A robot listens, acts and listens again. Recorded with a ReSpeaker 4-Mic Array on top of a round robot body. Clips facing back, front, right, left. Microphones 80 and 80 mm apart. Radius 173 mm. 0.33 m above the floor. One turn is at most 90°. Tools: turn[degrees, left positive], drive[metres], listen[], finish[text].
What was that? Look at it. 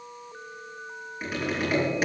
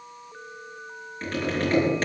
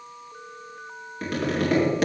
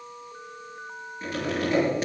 Thought: The tapping: 100° right.
Action: turn[-90]
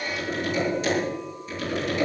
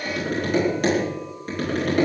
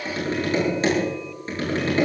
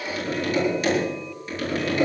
Thought: The tapping is now 30° right.
Action: turn[-30]
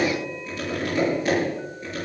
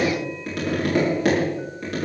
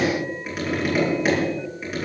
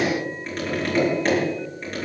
Action: finish[Found it: tapping, straight ahead, over 4 m away.]